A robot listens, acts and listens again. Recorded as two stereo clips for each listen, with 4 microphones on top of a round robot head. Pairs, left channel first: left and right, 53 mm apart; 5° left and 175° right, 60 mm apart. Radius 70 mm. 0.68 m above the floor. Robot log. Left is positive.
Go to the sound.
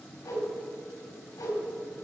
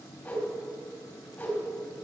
note: The whoosh: 65° left.
cmd yaw +65
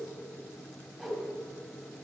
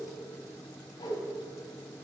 cmd fwd 1.0
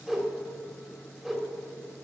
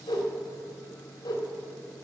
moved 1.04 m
note: The whoosh is now 10° right.
cmd yaw -10
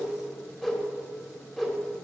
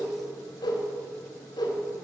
cmd fwd 1.0
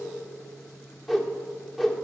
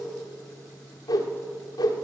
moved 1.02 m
cmd fwd 1.0
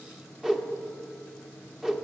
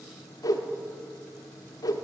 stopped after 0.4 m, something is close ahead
note: The whoosh is now 10° right.
cmd yaw -10
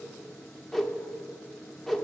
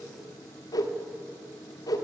end: Arrived at the whoosh, straight ahead.